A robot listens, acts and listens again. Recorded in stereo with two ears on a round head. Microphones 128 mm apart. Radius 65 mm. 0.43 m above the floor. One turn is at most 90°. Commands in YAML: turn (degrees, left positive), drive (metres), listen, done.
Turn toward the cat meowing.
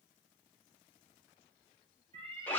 turn: -35
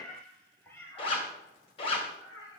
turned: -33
turn: 30
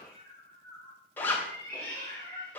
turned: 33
turn: 15
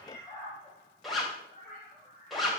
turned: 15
done: "Facing the cat meowing."